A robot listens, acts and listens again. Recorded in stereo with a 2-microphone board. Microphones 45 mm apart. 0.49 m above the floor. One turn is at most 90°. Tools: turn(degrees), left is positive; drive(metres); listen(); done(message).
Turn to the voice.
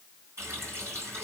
listen()
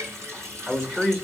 turn(degrees=-20)
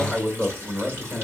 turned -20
turn(degrees=-90)
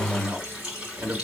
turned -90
turn(degrees=-85)
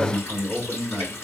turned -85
done("Facing the man speaking, 1 to 2 m away.")